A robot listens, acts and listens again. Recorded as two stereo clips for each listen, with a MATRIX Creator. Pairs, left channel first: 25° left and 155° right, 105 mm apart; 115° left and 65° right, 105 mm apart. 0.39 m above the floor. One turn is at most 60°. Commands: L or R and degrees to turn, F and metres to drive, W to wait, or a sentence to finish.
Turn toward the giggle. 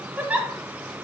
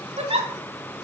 R60
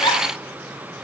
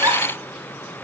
R15
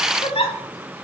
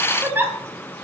Found it: a giggle, straight ahead.